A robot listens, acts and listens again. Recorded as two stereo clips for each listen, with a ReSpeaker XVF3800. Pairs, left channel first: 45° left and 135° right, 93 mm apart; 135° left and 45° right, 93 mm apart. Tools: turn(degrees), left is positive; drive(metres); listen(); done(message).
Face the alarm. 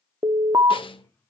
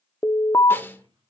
turn(degrees=180)
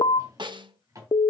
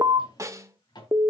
turn(degrees=10)
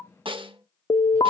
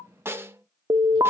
done("Facing the alarm.")